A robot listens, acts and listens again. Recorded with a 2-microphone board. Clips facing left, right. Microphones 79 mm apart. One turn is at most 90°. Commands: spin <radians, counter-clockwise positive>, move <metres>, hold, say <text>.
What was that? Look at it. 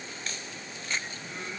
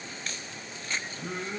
spin -1.05
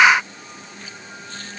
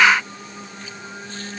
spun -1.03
spin -1.05
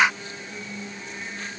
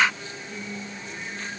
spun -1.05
say Facing the singing, over 4 m away.